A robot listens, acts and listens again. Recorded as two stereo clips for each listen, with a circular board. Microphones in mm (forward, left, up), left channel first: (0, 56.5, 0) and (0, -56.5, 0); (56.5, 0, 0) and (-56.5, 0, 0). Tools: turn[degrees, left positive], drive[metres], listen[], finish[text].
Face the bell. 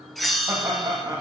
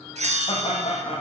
Thought: The bell: straight behind.
Action: turn[180]
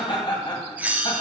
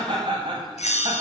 Thought: The bell is now 15° right.
Action: turn[-15]
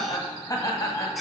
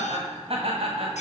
Action: finish[Found it: a bell, straight ahead, under 1 m away.]